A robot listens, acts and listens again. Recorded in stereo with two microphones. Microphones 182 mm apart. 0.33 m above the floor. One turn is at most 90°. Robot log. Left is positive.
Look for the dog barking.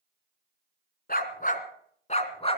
note: The dog barking: about 30° left or 150° left.
cmd yaw +30
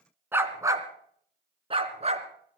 note: So it is at 35° right.
cmd yaw -35
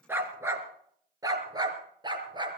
note: The dog barking is now 25° right.
cmd yaw -25
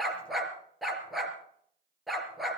end: Facing the dog barking, 2 to 4 m away.